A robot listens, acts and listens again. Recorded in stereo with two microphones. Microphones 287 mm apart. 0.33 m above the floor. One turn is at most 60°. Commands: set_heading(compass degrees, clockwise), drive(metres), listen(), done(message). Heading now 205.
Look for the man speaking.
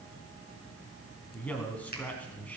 set_heading(175)
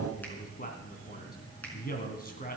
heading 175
set_heading(115)
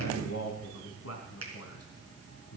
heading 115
set_heading(55)
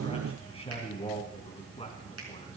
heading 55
set_heading(30)
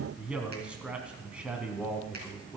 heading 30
done("Facing the man speaking, 2 to 4 m away.")